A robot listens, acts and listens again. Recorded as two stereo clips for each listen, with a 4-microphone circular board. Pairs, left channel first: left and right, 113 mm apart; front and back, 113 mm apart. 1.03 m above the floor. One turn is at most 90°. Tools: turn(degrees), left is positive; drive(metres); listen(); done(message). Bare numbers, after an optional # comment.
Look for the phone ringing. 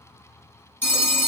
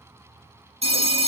# The phone ringing: 160° left.
turn(90)
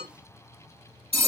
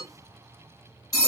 # The phone ringing is now 60° left.
turn(60)
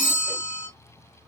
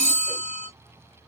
# The phone ringing is now 20° left.
turn(20)
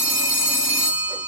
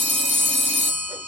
done("Found it: a phone ringing, straight ahead.")